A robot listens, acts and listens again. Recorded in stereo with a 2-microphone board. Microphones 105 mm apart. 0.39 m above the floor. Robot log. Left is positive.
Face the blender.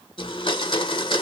note: The blender: about 50° left or 130° left.
cmd yaw +50
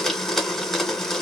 end: Found it: a blender, straight ahead.